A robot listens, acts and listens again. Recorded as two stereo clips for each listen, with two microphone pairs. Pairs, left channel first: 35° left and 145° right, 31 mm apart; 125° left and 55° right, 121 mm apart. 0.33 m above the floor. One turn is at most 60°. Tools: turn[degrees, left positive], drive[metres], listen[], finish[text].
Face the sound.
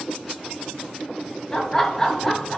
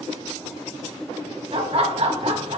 Thought: The laughter: 40° right.
Action: turn[-40]
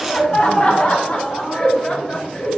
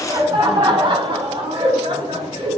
Thought: The laughter is now 20° right.
Action: turn[-20]
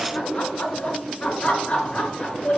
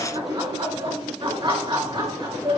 Action: finish[Found it: laughter, straight ahead.]